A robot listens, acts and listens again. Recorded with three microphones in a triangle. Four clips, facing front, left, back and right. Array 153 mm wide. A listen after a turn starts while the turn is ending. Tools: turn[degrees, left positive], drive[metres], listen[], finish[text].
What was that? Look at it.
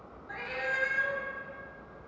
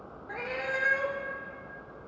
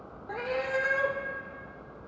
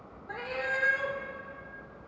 Thought: The cat meowing: 170° left.
Action: turn[170]
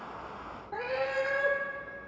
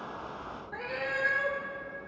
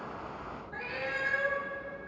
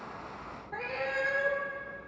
Action: finish[Facing the cat meowing.]